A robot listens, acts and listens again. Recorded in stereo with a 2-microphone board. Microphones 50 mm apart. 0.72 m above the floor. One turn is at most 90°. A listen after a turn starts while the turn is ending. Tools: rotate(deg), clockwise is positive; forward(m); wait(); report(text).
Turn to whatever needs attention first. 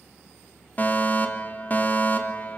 rotate(-35)
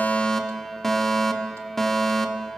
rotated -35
rotate(-10)
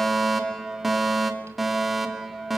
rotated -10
report("Found it: a fire alarm, straight ahead.")